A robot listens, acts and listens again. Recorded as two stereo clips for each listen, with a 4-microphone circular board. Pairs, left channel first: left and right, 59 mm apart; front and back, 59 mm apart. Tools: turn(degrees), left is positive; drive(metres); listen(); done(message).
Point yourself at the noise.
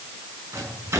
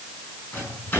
turn(degrees=-60)
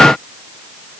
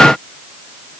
listen()
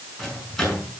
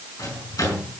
done("Facing the microwave.")